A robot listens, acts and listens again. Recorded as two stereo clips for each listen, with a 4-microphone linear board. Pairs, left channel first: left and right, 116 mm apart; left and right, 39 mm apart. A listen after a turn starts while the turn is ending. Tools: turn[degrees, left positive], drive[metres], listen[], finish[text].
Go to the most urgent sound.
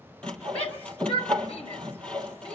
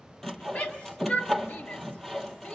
Thought: The shout: about 60° left or 120° left.
Action: turn[60]
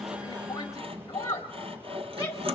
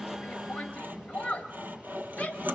Thought: So it is at 35° left.
Action: turn[35]
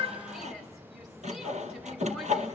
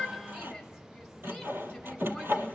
Action: listen[]
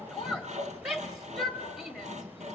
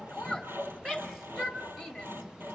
Action: drive[1.0]
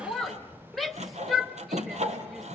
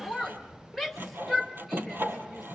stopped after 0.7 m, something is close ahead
Action: finish[Arrived at the shout, straight ahead.]